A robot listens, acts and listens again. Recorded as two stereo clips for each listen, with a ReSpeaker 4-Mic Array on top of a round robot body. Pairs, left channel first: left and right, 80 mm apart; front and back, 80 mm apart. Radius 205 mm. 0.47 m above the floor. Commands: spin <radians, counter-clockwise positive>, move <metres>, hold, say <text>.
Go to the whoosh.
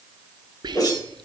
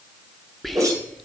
spin 2.27
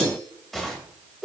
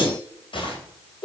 move 1.0
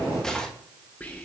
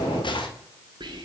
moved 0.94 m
move 1.0
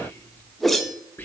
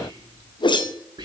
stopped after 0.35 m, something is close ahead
say Arrived at the whoosh, straight ahead.